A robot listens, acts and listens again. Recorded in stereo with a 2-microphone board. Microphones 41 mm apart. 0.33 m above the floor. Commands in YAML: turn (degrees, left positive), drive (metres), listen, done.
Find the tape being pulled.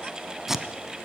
turn: -30
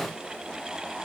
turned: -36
listen: true
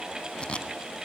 turn: 25
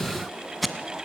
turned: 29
done: "Facing the tape being pulled."